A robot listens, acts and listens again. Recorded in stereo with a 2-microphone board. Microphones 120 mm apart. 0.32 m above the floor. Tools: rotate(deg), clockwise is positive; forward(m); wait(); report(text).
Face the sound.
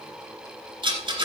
rotate(40)
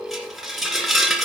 report("Facing the rattle.")